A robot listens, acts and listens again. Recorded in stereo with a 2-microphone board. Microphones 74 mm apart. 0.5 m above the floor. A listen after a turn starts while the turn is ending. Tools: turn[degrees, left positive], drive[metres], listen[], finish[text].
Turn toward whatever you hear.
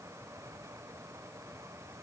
Action: listen[]
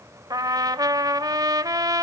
Thought: The trumpet: about 60° right or 120° right.
Action: turn[-60]
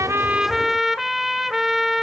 Action: finish[Facing the trumpet, 1 to 2 m away.]